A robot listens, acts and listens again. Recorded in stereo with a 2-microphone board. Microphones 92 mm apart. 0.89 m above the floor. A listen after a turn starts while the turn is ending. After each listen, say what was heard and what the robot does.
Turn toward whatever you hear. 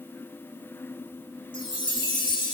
The chime: about 60° left or 120° left. Turn 60° left.
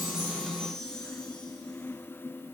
So it is at 10° left. Turn 10° left.
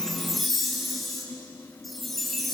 Facing the chime, 1 to 2 m away.